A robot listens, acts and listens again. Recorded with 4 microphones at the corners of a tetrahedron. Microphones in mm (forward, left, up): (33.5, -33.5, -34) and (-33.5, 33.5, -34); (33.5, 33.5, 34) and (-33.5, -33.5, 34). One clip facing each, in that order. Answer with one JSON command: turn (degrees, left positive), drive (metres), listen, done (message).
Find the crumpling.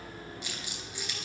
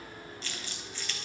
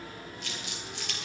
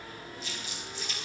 {"turn": 30}
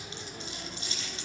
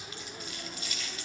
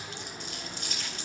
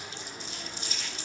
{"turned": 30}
{"turn": 15}
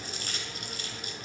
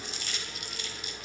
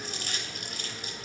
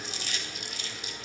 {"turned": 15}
{"done": "Found it: crumpling, straight ahead, 2 to 4 m away."}